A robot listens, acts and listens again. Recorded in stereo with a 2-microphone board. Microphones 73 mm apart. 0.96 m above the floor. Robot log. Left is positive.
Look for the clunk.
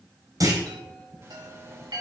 note: The clunk: about 50° right or 130° right.
cmd yaw -50
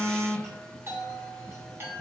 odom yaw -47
cmd idle
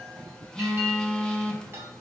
end: I heard a clunk, but can't make it out now. It was about 5° right or 80° right.